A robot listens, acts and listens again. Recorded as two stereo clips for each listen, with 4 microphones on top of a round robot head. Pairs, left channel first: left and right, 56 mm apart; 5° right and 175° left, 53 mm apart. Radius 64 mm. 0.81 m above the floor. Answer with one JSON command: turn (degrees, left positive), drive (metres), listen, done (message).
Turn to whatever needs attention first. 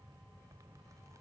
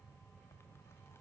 {"listen": true}
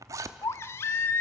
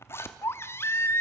{"turn": 40}
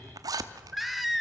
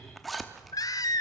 {"done": "Found it: a baby crying, straight ahead, under 1 m away."}